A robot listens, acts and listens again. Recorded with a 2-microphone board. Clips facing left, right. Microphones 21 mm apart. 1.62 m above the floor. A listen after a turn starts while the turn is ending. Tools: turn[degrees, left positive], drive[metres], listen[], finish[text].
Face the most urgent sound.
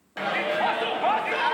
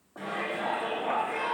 Thought: The shout: about 65° left or 115° left.
Action: turn[65]
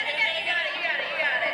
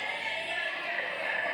Thought: So it is at 50° left.
Action: turn[50]
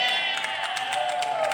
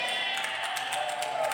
Thought: The shout is now 15° left.
Action: turn[15]
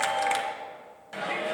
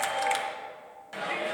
Action: finish[Facing the shout, 1 to 2 m away.]